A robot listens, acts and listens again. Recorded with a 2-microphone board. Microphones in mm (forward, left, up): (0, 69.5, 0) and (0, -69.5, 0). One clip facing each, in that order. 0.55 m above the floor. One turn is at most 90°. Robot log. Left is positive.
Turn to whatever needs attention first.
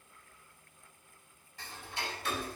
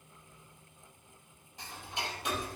cmd idle
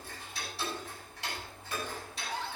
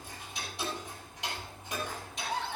note: The scream: about 65° right or 115° right.
cmd yaw -65
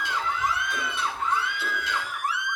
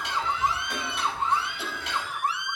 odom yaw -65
note: So it is at 30° right.
cmd yaw -30
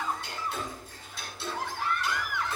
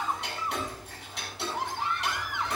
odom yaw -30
note: The scream is now 25° right.
cmd yaw -25
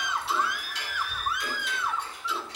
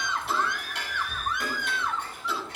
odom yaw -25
note: The scream is now 10° left.
cmd yaw +10
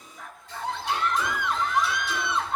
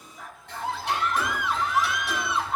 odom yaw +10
end: Facing the scream.